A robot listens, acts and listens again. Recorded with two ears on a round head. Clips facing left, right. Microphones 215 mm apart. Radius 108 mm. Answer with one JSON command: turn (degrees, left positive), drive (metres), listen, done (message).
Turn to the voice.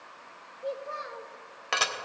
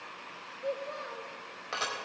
{"turn": 30}
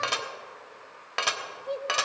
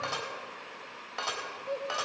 {"turn": 140}
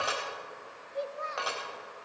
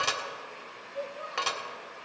{"turn": 30}
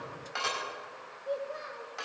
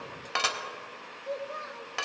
{"turn": -10}
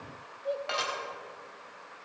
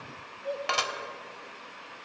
{"done": "Found it: a child speaking, straight ahead."}